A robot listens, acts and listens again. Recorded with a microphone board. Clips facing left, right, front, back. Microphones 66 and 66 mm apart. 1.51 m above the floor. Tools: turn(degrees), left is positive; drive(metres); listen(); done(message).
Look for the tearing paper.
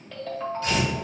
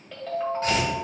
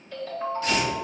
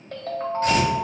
turn(degrees=-135)
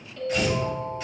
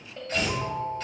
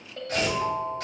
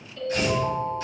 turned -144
turn(degrees=10)
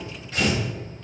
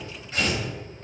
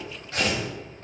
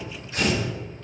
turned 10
done("Found it: tearing paper, straight ahead.")